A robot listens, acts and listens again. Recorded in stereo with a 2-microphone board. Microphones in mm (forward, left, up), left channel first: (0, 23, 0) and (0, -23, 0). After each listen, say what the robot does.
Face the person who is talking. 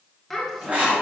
Turn 30° left.
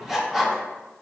Keep listening.
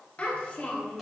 Turn 145° left.
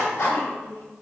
Turn 40° left.
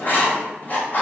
Keep listening.
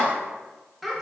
Found it: a child speaking, straight ahead, 1 to 2 m away.